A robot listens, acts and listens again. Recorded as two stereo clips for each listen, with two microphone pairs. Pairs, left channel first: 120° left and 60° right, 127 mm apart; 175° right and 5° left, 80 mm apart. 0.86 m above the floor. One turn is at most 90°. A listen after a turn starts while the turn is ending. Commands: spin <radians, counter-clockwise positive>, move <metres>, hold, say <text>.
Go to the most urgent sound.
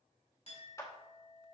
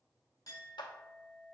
hold
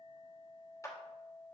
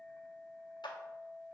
hold
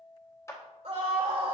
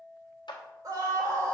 spin -0.52
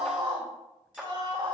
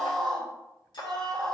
move 1.0
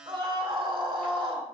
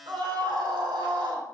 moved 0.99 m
spin -0.17
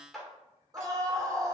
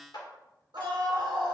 move 1.0
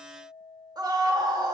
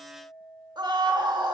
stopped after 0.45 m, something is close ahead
say I am next to the scream.